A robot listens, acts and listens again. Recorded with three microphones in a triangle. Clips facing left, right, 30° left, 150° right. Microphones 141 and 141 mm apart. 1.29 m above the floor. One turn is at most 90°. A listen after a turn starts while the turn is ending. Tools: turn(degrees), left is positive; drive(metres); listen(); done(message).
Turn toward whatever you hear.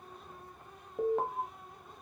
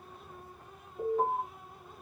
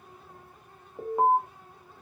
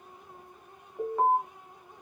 turn(degrees=90)
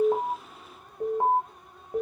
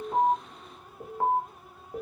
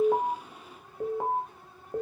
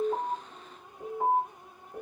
turn(degrees=20)
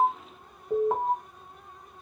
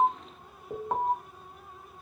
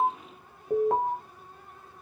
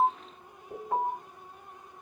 done("Facing the alarm.")